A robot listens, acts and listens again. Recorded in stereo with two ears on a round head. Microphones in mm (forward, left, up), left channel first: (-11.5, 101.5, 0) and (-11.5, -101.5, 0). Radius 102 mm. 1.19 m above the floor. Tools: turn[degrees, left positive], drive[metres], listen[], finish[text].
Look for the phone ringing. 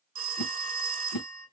Thought: The phone ringing: about 35° right or 145° right.
Action: turn[-35]
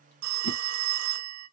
Thought: So it is at 110° right.
Action: turn[-110]
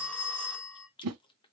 Action: finish[Found it: a phone ringing, straight ahead.]